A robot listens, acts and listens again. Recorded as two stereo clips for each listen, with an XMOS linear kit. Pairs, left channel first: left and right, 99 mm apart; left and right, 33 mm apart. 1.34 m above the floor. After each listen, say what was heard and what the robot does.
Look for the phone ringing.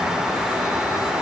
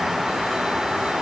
Keep listening.
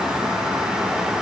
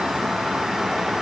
Keep listening.
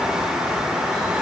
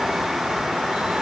I can't make out a phone ringing to turn to.